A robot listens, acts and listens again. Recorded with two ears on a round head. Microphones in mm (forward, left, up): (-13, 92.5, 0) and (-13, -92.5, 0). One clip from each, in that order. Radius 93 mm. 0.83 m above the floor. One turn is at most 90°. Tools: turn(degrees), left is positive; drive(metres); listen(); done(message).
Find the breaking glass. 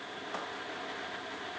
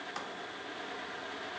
listen()
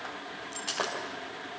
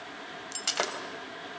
turn(degrees=-50)
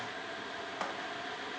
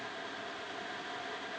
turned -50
listen()
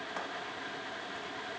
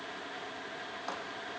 done("I heard breaking glass, but can't make it out now. It was about straight ahead or 80° right.")